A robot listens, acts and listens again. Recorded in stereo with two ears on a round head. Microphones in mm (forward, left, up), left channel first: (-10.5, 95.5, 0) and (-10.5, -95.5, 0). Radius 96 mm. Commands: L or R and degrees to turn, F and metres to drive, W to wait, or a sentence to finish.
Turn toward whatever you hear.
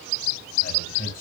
L45
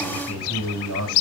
L90
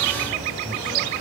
W
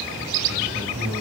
Facing the man speaking, over 4 m away.